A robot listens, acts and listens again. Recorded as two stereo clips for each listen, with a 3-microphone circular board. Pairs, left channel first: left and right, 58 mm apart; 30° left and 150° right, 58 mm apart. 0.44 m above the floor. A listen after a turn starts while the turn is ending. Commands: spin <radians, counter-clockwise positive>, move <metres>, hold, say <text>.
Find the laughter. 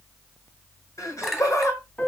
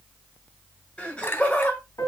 spin 1.48
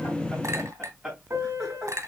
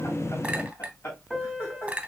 spin -0.26
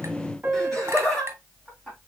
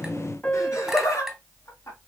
say Facing the laughter, 2 to 4 m away.